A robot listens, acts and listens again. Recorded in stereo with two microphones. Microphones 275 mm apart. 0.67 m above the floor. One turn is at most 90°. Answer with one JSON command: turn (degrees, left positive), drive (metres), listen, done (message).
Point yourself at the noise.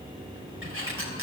{"turn": -45}
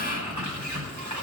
{"turn": -90}
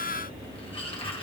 {"turn": 20}
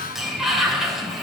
{"done": "Facing the sliding door, 2 to 4 m away."}